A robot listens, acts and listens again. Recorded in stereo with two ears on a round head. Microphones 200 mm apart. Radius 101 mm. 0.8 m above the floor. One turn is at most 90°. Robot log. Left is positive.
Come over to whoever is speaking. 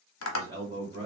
note: The man speaking: about 30° right or 150° right.
cmd yaw -30
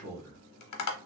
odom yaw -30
note: So it is at 120° right.
cmd yaw -90
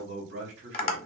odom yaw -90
note: The man speaking is now 55° right.
cmd yaw -55
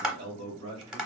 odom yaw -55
note: The man speaking is now 25° right.
cmd yaw -25
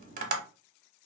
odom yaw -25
cmd idle
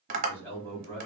note: The man speaking is now 10° left.
cmd yaw +10
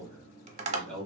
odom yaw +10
cmd fwd 1.0
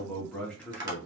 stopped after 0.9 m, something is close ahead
note: The man speaking is now 10° left.
cmd yaw +10
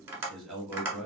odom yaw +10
end: I am next to the man speaking.